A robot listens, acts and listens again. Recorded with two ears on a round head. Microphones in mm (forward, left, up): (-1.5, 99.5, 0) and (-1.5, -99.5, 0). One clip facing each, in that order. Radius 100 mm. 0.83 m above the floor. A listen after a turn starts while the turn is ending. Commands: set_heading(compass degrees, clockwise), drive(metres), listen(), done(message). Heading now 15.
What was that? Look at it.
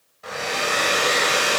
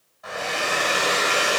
set_heading(335)
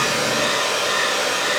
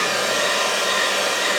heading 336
done("Found it: a hair dryer, straight ahead.")